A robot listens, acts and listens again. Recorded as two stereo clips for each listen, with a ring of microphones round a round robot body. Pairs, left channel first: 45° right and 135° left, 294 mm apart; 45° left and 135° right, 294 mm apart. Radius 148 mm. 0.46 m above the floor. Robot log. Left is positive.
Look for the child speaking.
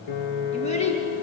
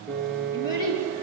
note: The child speaking: 25° left.
cmd yaw +25
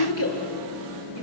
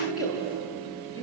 end: Facing the child speaking, over 4 m away.